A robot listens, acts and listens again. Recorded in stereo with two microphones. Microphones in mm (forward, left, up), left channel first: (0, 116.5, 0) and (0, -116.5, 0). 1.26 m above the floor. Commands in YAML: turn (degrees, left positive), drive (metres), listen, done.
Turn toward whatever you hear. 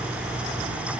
listen: true
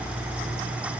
listen: true
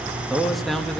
turn: 30
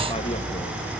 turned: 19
listen: true
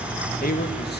turn: 140
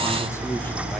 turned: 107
turn: 30
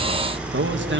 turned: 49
turn: -55
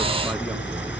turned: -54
listen: true
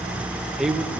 done: "Found it: a man speaking, straight ahead."